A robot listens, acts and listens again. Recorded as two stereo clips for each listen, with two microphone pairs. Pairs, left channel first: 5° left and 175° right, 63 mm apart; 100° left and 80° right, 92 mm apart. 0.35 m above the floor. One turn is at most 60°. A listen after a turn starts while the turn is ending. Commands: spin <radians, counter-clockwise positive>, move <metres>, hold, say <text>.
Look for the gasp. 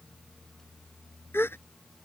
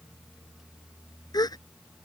spin 0.96
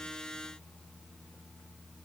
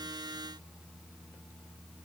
say Facing where the gasp came from. I can't hear it now.